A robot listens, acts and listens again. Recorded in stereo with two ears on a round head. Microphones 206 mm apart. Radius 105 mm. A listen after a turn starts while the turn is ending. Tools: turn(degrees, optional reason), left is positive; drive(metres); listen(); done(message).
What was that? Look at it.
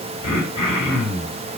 turn(degrees=-20, reason="The throat clearing: about 20° right or 160° right.")
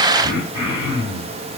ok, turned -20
turn(degrees=-140, reason="So it is at 140° right.")
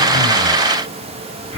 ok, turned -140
done("Found it: throat clearing, straight ahead, 1 to 2 m away.")